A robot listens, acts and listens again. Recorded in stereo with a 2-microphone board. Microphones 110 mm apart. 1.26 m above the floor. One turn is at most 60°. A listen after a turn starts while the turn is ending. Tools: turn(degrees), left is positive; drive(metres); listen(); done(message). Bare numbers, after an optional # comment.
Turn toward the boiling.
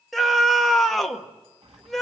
# The boiling: about 60° right or 120° right.
turn(-60)
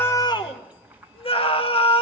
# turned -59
# So it is at 15° right.
turn(-15)
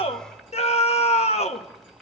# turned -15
done("Facing the boiling, 1 to 2 m away.")